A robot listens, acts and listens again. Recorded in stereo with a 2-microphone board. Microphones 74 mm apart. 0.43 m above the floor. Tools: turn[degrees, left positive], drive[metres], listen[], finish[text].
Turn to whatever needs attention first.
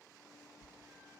Action: listen[]
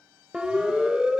Action: turn[-30]
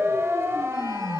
Thought: So it is at 140° right.
Action: turn[-140]
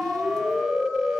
Thought: The siren is now 10° right.
Action: turn[-10]
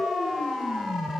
Action: finish[Found it: a siren, straight ahead, 2 to 4 m away.]